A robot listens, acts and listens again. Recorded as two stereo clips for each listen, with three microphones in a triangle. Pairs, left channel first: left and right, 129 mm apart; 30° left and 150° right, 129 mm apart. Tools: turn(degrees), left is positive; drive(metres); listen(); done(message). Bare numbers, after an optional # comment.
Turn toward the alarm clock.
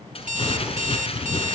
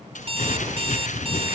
# The alarm clock: 105° right.
turn(-105)
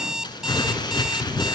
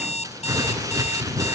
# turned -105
done("Found it: an alarm clock, straight ahead.")